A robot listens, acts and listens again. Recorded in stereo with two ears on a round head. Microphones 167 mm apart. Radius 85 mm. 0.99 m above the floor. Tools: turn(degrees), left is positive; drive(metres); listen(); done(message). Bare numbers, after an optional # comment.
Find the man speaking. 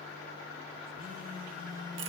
listen()
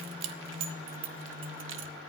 listen()
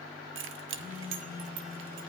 done("I can't make out a man speaking to turn to.")